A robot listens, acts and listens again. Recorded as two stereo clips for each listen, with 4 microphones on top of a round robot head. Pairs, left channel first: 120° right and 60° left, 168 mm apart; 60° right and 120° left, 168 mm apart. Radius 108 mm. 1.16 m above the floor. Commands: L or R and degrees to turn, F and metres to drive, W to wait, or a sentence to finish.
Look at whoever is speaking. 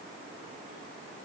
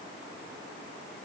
W
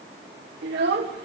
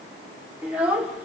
L40
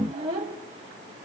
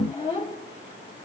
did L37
Facing the child speaking, 2 to 4 m away.